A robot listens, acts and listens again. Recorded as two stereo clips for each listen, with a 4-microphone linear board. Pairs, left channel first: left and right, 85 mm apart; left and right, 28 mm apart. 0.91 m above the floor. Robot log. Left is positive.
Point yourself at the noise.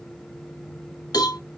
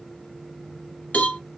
note: The cowbell: about 50° left or 130° left.
cmd yaw +50
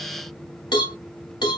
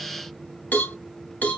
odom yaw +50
note: So it is at 75° left.
cmd yaw +75
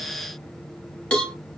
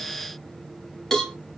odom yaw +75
note: The cowbell is now 15° left.
cmd yaw +15
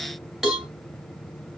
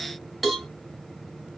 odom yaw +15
end: Facing the cowbell.